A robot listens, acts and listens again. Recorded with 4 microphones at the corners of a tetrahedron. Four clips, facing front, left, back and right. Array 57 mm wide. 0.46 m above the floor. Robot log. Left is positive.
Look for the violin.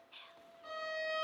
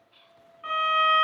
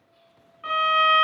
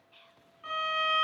note: The violin: 160° left.
cmd yaw +160
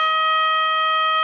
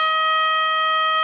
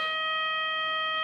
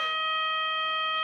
note: The violin is now 45° left.
cmd yaw +45
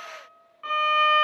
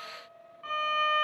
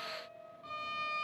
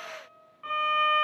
note: The violin is now 10° right.
cmd yaw -10
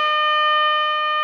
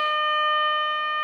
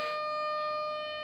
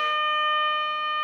end: Facing the violin, under 1 m away.